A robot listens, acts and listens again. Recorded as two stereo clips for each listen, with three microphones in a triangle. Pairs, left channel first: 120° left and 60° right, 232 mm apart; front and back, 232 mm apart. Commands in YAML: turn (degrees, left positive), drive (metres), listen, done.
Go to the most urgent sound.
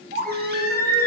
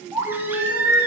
turn: -100
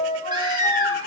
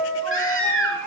turn: 10
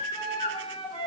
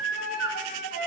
drive: 1.0
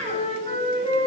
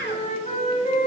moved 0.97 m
drive: 1.0
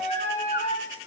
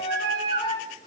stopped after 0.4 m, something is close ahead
turn: -10
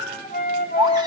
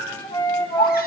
done: "I am next to the baby crying."